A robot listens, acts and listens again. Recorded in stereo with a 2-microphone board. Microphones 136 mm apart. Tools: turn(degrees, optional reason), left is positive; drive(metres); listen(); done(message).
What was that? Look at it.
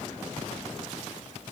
listen()
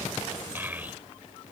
turn(degrees=-30)
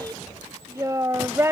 turn(degrees=-20, reason="The child speaking: about 20° right or 160° right.")
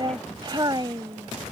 turn(degrees=-150, reason="So it is at 150° right.")
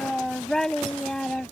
done("Found it: a child speaking, straight ahead.")